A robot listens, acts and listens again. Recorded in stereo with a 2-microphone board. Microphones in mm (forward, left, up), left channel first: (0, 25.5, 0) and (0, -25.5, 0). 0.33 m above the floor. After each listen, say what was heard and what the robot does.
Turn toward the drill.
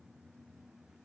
Keep listening.
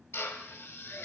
The drill: about 50° left or 130° left. Turn 50° left.
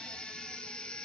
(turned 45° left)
Keep listening.
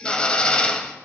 So it is at 25° left. Turn 25° left.
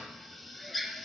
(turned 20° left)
Found it: a drill, straight ahead.